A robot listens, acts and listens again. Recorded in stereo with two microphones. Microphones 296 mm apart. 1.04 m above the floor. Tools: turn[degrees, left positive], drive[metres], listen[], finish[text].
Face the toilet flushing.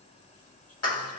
Action: listen[]
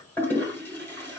Action: turn[30]
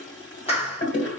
Thought: So it is at 140° left.
Action: turn[140]
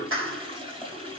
Thought: The toilet flushing is now 20° right.
Action: turn[-20]
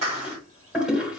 Action: finish[Facing the toilet flushing, 1 to 2 m away.]